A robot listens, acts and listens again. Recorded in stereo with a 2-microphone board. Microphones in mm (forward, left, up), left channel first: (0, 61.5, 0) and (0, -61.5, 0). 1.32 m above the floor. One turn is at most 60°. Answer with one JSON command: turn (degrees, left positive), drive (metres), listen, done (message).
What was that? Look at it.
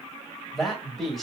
{"turn": 30}
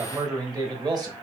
{"turn": -35}
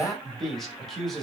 {"done": "Facing the man speaking, 1 to 2 m away."}